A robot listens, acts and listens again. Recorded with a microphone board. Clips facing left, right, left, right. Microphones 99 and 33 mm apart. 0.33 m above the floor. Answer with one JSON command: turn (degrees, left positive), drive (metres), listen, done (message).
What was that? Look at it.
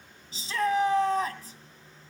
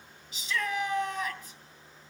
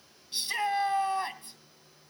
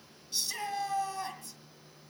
{"turn": 35}
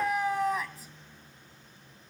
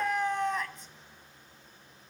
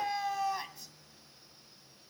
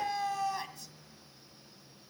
{"done": "Found it: a shout, straight ahead, 2 to 4 m away."}